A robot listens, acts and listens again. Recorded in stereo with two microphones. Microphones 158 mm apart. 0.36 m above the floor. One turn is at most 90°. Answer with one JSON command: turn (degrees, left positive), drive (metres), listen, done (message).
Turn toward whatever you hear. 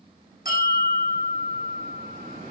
{"turn": 65}
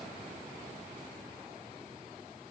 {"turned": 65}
{"listen": true}
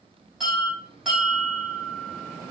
{"done": "Facing the bell, 2 to 4 m away."}